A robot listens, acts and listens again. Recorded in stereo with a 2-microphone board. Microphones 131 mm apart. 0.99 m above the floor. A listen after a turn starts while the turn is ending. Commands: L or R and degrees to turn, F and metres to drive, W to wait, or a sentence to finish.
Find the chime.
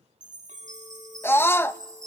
R90
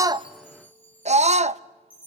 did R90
L15
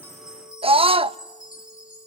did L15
Facing the chime, over 4 m away.